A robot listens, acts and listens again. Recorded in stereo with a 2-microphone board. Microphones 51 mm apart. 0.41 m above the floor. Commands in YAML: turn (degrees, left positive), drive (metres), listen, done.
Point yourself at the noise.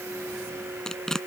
turn: 30
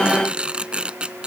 turn: -20
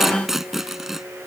done: "Found it: tearing paper, straight ahead."